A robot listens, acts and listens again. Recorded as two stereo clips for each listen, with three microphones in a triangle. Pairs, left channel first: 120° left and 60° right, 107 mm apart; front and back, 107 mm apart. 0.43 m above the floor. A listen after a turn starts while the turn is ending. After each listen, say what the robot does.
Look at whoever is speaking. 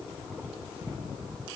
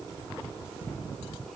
Keep listening.
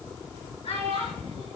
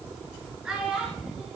Turn 100° left.
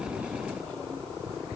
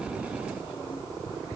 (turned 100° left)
Keep listening.
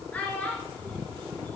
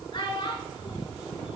Turn 45° left.
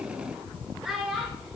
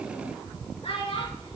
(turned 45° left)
Turn 25° left.
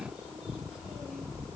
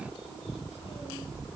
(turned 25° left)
Keep listening.
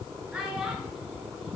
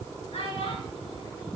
Turn 20° left.
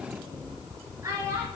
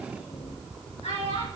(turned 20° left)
Found it: a child speaking, straight ahead.